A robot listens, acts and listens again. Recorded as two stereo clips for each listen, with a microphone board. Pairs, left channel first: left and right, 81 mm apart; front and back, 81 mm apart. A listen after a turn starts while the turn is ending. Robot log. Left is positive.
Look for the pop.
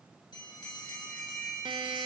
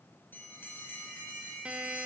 cmd idle
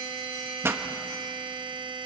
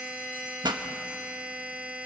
note: The pop: 150° right.
cmd yaw -150
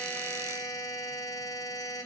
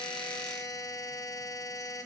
end: I heard a pop from this way, but can't make it out now.